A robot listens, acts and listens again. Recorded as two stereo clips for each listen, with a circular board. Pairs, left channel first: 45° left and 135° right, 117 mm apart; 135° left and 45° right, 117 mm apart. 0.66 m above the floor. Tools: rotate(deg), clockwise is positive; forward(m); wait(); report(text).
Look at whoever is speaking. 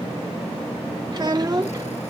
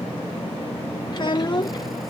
rotate(-180)
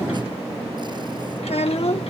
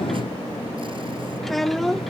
rotate(-45)
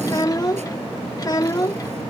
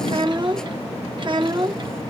report("Found it: a child speaking, straight ahead.")